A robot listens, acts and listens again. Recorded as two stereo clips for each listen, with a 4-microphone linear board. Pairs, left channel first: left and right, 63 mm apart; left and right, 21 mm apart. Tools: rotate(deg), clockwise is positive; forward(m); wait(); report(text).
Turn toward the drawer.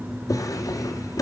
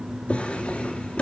rotate(-90)
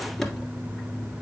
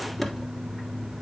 report("Facing the drawer, 1 to 2 m away.")